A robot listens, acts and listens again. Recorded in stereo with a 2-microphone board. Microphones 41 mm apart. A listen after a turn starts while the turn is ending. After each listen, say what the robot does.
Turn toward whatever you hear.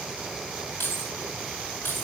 Turn 60° left.
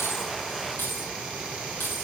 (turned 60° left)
Turn 55° left.
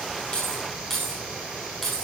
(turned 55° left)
Turn 10° left.
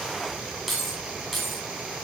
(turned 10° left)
Facing the keys jangling.